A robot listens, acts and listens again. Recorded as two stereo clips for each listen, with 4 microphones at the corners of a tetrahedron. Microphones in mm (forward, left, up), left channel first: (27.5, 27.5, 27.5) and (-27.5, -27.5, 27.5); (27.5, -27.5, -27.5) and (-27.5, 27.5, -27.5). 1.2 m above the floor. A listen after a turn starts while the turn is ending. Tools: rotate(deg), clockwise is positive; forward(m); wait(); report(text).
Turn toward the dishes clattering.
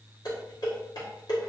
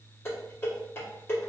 rotate(-15)
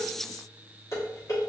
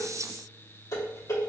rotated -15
report("Facing the dishes clattering, 1 to 2 m away.")